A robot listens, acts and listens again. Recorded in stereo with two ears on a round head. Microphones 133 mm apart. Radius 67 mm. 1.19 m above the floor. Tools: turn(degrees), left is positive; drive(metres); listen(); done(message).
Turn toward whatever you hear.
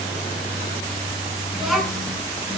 turn(degrees=30)
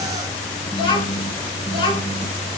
turn(degrees=145)
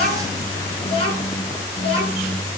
turn(degrees=35)
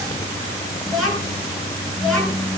done("Facing the child speaking, over 4 m away.")